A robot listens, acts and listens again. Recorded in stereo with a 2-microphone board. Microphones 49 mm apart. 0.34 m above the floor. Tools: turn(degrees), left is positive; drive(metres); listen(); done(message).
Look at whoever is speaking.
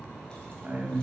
turn(degrees=-35)
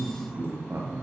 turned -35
turn(degrees=-100)
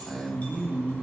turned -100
done("Found it: a man speaking, straight ahead, 2 to 4 m away.")